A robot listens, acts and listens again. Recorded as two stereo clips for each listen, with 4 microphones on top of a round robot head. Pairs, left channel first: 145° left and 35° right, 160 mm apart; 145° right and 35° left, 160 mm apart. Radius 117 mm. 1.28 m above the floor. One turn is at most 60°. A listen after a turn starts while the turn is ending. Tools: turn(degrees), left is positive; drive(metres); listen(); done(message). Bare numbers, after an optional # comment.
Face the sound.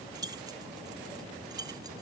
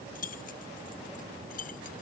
# The keys jangling: 105° right.
turn(-60)
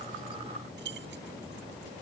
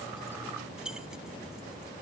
# The keys jangling is now 50° right.
turn(-50)
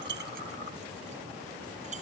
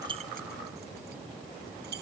# The keys jangling is now 10° left.
turn(10)
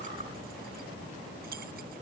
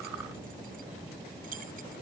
done("Facing the keys jangling.")